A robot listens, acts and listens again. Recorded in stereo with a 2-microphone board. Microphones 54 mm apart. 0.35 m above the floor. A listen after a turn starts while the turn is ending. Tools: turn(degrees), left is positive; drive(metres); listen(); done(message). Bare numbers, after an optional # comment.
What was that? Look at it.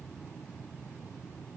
listen()
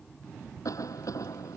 turn(90)
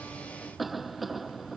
done("Found it: a cough, straight ahead.")